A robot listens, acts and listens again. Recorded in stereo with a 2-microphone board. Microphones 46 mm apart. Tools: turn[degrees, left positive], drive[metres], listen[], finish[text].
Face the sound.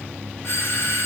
Thought: The doorbell: about 55° left or 125° left.
Action: turn[55]
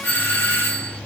Thought: So it is at 50° left.
Action: turn[50]
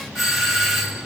Action: finish[Found it: a doorbell, straight ahead, 1 to 2 m away.]